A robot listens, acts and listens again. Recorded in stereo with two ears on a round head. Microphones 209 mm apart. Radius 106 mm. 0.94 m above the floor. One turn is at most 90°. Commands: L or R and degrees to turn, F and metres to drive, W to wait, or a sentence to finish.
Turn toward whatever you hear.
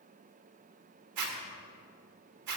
R90
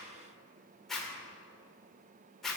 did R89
Facing the zipper.